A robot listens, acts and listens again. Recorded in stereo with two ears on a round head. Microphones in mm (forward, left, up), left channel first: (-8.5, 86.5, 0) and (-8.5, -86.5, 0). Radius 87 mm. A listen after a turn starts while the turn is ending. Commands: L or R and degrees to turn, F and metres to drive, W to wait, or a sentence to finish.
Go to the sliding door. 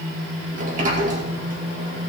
R40
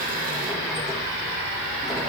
W
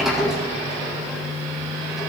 F1.0
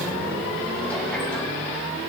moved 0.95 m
W
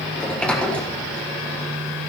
F1.0
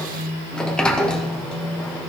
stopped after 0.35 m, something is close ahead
Arrived at the sliding door, straight ahead.